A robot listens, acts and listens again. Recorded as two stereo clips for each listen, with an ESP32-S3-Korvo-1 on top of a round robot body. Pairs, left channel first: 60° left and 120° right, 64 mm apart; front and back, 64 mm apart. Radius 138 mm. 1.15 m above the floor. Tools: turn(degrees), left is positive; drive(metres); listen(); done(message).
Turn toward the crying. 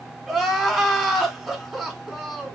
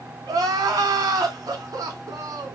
turn(degrees=155)
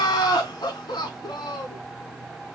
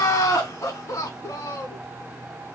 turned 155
turn(degrees=45)
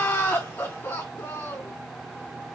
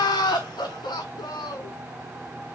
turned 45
done("Found it: crying, straight ahead.")